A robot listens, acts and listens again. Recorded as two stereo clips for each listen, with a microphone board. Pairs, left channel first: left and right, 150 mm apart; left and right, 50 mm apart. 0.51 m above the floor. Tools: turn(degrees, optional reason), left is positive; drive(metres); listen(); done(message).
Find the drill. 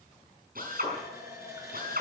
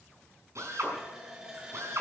turn(degrees=-75, reason="The drill: about 75° right or 105° right.")
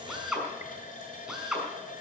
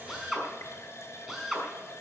done("Found it: a drill, straight ahead, over 4 m away.")